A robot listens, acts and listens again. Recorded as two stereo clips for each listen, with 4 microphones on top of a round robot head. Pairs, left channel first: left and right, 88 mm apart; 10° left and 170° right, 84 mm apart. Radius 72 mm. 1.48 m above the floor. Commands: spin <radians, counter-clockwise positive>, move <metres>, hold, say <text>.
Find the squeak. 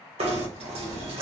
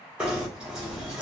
hold
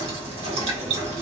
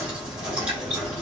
hold
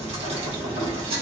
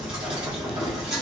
say I can't make out a squeak, only knocking.